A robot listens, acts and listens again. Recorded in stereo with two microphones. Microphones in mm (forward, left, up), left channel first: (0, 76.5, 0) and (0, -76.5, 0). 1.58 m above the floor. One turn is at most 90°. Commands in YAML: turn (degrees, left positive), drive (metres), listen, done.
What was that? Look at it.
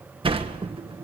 turn: -35
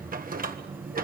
turn: -90
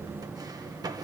turn: -25
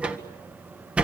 turn: -10
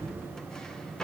done: "Facing the sliding door, 1 to 2 m away."